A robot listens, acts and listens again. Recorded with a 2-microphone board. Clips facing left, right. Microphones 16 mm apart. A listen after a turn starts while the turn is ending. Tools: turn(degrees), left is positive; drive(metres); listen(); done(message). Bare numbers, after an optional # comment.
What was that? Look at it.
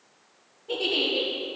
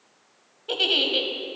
# The giggle: about 65° right or 115° right.
turn(-65)
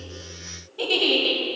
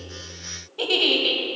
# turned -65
# So it is at 15° right.
turn(-15)
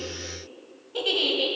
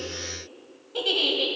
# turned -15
done("Facing the giggle.")